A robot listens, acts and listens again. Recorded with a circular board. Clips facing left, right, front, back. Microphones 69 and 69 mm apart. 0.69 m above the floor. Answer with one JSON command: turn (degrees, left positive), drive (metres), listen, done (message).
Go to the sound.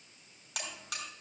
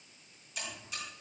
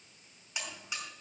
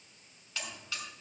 {"turn": 70}
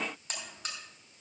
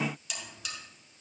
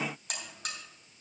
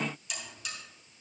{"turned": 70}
{"turn": 40}
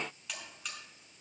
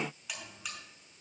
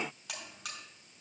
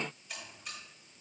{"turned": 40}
{"drive": 1.0}
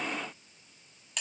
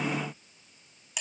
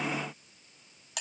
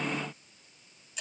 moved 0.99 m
{"drive": 1.0}
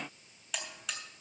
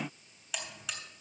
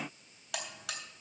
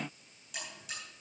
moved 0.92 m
{"drive": 1.0}
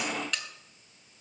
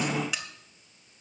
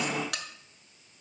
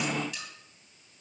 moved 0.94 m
{"turn": -10}
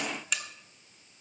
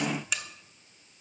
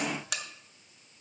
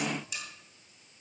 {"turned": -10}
{"drive": 1.0}
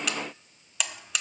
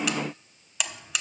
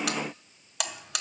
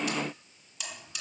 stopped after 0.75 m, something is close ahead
{"done": "Arrived at the buzzer, straight ahead."}